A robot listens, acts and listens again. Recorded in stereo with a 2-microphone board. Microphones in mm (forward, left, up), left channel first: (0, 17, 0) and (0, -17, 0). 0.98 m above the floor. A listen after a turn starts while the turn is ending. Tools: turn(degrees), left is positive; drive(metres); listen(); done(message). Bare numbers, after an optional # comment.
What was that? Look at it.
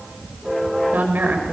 # The woman speaking: about 70° right or 110° right.
turn(-70)
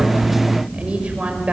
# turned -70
# So it is at 35° right.
turn(-35)
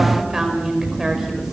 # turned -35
# The woman speaking is now 10° right.
turn(-10)
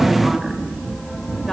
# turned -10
listen()
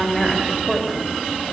# The woman speaking is now 10° left.
turn(10)
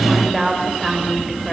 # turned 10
done("Found it: a woman speaking, straight ahead.")